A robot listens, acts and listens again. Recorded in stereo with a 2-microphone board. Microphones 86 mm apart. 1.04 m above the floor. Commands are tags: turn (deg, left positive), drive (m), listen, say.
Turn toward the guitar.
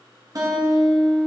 <turn deg="-50"/>
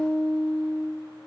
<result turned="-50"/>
<turn deg="-75"/>
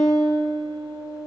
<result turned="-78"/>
<say>Facing the guitar, 1 to 2 m away.</say>